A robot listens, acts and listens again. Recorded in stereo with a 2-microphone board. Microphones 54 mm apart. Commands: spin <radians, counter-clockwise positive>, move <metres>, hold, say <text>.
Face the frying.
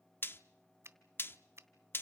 spin 0.79
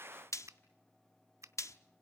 spin 1.48
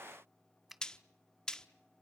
spin 0.26
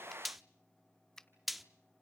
say Facing the frying.